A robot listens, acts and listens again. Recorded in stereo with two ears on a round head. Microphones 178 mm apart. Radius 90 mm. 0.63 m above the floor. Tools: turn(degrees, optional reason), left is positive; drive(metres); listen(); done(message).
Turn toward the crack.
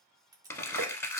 turn(degrees=-20, reason="The crack: about 20° right or 160° right.")
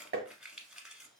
listen()
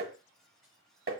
done("I heard a crack, but can't make it out now. It was about straight ahead or 140° right.")